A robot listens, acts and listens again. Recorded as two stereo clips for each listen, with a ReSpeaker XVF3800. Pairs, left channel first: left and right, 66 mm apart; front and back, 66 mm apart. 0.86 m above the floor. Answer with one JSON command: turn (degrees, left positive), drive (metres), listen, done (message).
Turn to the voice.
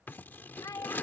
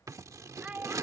{"turn": 110}
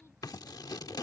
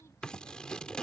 {"listen": true}
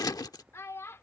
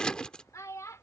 {"turn": 40}
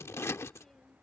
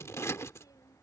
{"listen": true}
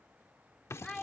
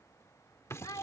{"done": "Found it: a child speaking, straight ahead."}